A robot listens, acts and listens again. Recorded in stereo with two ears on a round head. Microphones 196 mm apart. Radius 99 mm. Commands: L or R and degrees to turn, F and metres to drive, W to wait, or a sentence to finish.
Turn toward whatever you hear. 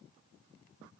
W
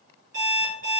R35
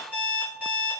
R10
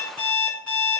Facing the alarm clock, 1 to 2 m away.